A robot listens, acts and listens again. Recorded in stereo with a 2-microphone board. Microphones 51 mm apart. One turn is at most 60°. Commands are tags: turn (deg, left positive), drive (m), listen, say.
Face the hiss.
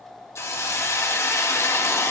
<turn deg="60"/>
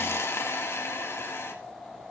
<turn deg="55"/>
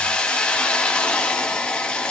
<turn deg="20"/>
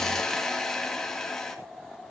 <turn deg="10"/>
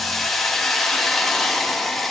<say>Found it: a hiss, straight ahead.</say>